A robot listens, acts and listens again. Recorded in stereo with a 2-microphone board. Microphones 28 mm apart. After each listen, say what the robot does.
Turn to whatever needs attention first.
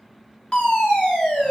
Turn 50° left.
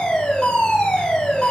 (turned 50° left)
Turn 75° left.
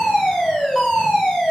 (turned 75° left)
Turn 20° right.
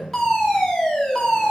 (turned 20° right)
Facing the fire alarm, 2 to 4 m away.